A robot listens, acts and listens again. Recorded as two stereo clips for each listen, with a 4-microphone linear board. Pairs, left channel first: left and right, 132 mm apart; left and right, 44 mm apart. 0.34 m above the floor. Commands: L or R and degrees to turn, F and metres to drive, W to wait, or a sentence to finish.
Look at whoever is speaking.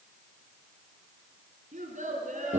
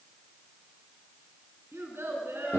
R75
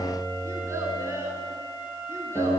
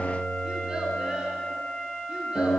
R20
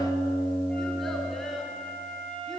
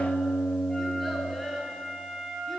Found it: a child speaking, straight ahead.